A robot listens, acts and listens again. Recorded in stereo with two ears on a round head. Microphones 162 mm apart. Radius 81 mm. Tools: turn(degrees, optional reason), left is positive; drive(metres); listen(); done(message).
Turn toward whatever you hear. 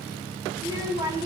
turn(degrees=-25, reason="The child speaking: about 25° right or 155° right.")
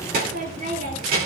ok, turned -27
turn(degrees=-130, reason="So it is at 130° right.")
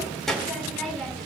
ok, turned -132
done("Facing the child speaking, 2 to 4 m away.")